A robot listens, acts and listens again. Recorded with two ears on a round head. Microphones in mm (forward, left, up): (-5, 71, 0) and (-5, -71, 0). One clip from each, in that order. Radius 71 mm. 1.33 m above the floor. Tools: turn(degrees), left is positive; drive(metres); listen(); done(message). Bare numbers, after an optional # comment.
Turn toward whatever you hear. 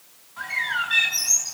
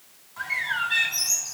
turn(-30)
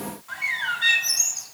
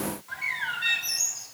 # So it is at 15° left.
turn(15)
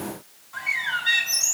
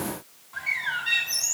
done("Found it: a bird, straight ahead.")